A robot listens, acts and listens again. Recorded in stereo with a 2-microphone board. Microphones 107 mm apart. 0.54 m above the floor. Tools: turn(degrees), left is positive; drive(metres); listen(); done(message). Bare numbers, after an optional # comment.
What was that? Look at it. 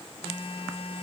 # The phone buzzing: about 55° left or 125° left.
turn(55)
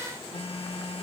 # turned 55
# So it is at 65° left.
turn(65)
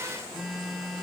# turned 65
done("Facing the phone buzzing.")